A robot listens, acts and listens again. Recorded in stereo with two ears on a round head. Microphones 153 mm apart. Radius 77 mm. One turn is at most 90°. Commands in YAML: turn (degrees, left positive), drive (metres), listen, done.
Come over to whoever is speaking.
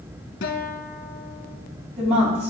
turn: -35
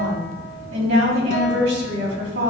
turn: -90
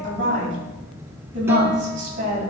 turn: -45
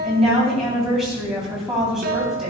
drive: 1.0
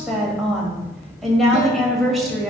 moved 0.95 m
drive: 1.0
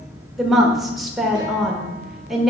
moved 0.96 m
drive: 1.0
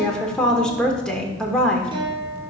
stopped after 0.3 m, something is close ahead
done: "Arrived at the woman speaking, straight ahead."